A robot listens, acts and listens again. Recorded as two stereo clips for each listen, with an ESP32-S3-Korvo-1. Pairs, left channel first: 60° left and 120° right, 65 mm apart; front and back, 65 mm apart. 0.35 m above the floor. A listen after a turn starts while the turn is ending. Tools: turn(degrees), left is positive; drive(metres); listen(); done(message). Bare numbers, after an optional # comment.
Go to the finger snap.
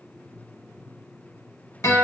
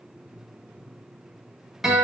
listen()
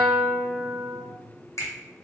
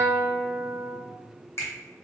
# The finger snap: 35° left.
turn(35)
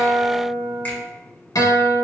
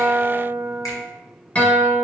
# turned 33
listen()
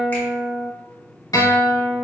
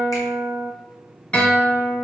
listen()
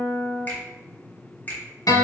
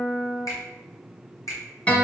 drive(1.0)
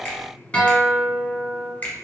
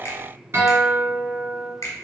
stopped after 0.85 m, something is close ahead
done("I am next to the finger snap.")